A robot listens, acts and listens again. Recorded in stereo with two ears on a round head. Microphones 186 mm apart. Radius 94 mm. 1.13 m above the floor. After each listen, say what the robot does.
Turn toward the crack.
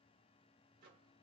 Keep listening.
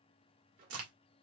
Turn 75° right.
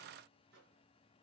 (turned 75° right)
Keep listening.
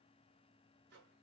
I heard a crack, but can't make it out now. It was about straight ahead or 30° right.